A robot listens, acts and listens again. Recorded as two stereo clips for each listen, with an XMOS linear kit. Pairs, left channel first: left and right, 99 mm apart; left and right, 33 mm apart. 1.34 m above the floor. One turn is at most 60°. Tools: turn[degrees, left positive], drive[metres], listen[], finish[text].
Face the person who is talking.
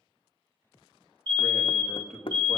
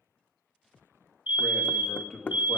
Action: turn[30]
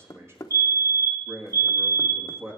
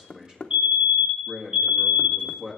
Thought: So it is at 25° right.
Action: turn[-25]
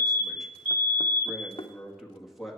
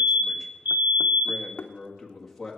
Action: finish[Found it: a man speaking, straight ahead, 1 to 2 m away.]